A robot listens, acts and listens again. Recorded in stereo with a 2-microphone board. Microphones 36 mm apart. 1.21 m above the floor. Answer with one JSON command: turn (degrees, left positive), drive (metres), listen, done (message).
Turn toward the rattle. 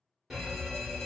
{"listen": true}
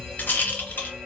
{"turn": 65}
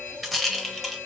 {"done": "Found it: a rattle, straight ahead."}